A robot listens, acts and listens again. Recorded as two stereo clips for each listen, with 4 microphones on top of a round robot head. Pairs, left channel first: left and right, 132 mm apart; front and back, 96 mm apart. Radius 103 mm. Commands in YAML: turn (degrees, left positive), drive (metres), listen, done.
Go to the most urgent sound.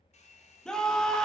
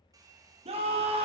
turn: 175
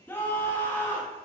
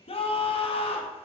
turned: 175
turn: 15
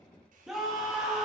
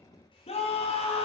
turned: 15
drive: 1.0
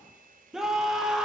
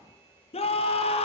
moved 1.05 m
drive: 1.0
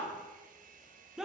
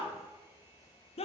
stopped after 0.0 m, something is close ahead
done: "I am next to the scream."